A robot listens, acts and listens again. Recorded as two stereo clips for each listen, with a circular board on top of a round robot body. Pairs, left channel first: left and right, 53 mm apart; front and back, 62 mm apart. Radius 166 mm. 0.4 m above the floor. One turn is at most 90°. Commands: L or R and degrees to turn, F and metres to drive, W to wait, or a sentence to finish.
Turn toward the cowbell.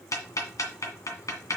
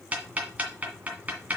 W
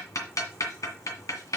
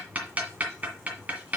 W
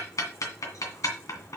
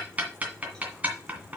I can't make out a cowbell, only ticking.